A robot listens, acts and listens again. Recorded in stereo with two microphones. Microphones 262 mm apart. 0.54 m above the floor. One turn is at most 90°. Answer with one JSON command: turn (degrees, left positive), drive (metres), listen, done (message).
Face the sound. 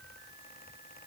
{"listen": true}
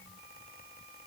{"listen": true}
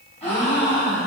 {"turn": 25}
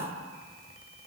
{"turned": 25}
{"listen": true}
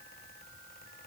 {"done": "I heard a gasp, but can't make it out now. It was about straight ahead or 130° left."}